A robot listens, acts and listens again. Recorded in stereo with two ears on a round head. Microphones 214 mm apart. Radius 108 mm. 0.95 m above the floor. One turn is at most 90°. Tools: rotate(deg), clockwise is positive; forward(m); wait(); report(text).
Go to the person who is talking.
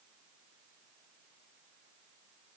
wait()
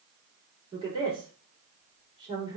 rotate(20)
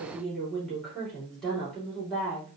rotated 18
forward(1.0)
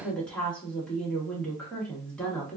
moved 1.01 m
forward(1.0)
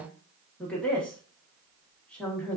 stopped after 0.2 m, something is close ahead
report("Arrived at the woman speaking, straight ahead.")